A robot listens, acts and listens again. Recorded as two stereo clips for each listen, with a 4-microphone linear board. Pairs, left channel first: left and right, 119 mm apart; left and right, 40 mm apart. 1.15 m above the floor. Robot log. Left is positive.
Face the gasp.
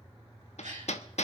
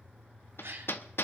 cmd yaw -90
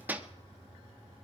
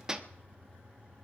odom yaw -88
end: Facing where the gasp came from. I can't hear it now.